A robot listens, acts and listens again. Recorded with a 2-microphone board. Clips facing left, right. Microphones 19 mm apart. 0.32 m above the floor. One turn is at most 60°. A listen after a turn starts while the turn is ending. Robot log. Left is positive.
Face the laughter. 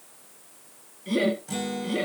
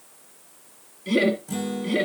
note: The laughter: about 15° right or 165° right.
cmd yaw -15
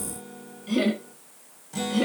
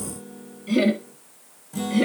cmd yaw +30
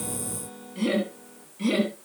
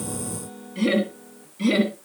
note: So it is at 15° right.
cmd yaw -15
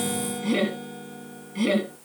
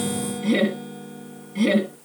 end: Facing the laughter.